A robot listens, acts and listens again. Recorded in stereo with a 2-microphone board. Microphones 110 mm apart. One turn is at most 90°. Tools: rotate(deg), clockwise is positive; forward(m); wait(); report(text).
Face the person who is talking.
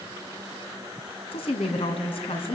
rotate(-65)
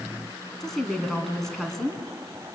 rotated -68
report("Found it: a woman speaking, straight ahead, 2 to 4 m away.")